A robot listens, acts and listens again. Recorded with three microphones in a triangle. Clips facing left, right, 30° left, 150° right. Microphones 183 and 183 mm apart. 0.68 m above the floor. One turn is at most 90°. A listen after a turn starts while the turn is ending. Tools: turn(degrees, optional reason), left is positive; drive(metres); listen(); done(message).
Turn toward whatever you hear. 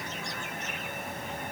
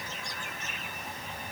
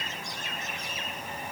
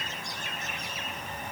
listen()
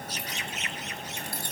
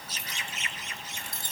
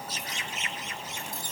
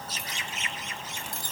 turn(degrees=-90, reason="The keys jangling: 155° right.")
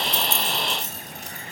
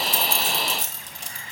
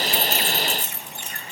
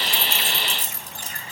turn(degrees=-90, reason="The keys jangling is now 100° right.")
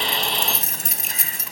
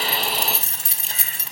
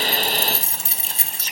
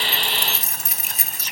turn(degrees=-30, reason="The keys jangling is now 30° right.")
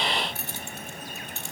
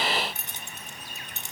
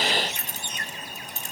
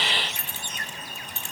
turn(degrees=-20, reason="The keys jangling is now 20° right.")
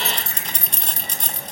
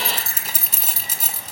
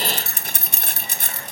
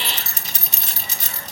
done("Found it: keys jangling, straight ahead, 1 to 2 m away.")